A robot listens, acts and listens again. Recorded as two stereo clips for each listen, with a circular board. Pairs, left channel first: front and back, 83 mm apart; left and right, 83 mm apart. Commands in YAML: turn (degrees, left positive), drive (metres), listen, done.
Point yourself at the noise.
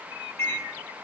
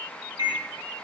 turn: -60
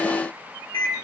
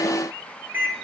turn: -20
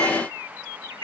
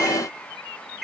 done: "Facing the microwave."